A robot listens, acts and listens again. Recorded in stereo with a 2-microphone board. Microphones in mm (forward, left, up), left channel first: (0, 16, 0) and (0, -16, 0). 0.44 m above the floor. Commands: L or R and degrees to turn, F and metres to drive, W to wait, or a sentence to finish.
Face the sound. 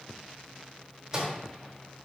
R20
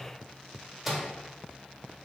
Facing the microwave, under 1 m away.